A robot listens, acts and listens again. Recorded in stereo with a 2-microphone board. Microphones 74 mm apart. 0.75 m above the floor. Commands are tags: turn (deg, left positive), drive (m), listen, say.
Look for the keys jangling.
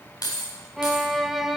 <turn deg="65"/>
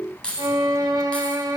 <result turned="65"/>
<turn deg="15"/>
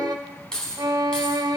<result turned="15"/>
<turn deg="10"/>
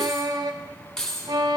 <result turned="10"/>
<turn deg="10"/>
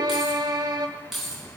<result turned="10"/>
<say>Found it: keys jangling, straight ahead.</say>